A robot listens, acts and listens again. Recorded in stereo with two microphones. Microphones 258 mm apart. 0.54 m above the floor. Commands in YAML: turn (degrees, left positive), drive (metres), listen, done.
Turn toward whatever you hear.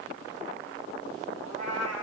turn: 90
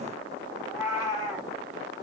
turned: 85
turn: -10
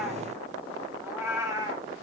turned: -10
turn: -15
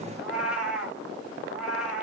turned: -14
done: "Found it: a cat meowing, straight ahead, 1 to 2 m away."